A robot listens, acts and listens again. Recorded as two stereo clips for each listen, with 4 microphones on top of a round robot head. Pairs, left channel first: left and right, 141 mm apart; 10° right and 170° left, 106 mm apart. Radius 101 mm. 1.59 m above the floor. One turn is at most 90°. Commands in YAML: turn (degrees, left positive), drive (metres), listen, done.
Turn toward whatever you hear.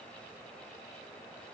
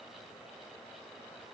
listen: true
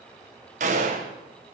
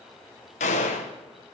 turn: -40
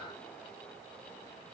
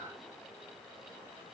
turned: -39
done: "Facing where the gunshot came from. I can't hear it now."